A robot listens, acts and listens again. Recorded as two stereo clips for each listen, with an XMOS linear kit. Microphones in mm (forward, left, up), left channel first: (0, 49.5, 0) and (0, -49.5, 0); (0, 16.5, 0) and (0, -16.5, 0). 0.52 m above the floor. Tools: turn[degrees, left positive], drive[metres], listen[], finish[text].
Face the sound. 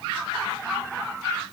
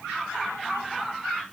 Action: listen[]
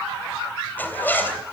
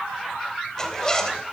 Thought: The zipper: about 20° left or 160° left.
Action: turn[20]
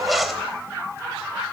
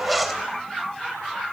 Action: finish[Facing the zipper, 2 to 4 m away.]